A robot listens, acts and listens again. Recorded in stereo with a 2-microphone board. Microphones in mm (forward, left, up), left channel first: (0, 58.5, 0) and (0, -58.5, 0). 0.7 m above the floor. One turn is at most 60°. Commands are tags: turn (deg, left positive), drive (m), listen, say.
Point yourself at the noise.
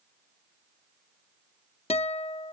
<turn deg="60"/>
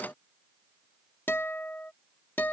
<turn deg="20"/>
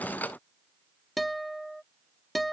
<say>Found it: a guitar, straight ahead.</say>